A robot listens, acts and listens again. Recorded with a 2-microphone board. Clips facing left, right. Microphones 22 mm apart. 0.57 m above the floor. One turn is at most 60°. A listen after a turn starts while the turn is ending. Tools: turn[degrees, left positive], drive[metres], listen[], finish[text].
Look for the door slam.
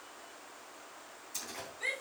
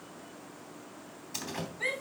Thought: The door slam: about 75° right or 105° right.
Action: turn[-60]
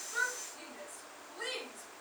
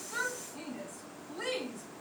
Action: listen[]
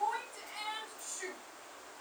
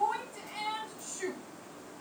Action: finish[I heard a door slam, but can't make it out now. It was about 15° right or 45° right.]